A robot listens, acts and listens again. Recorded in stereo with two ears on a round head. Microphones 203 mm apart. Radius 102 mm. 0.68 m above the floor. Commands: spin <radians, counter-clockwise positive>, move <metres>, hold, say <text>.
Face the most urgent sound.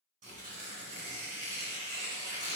hold
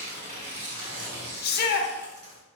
spin 0.79
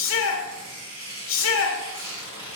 spin 1.48
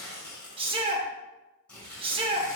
spin -0.44
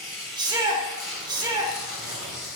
spin -0.35
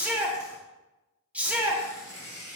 say Found it: a shout, straight ahead.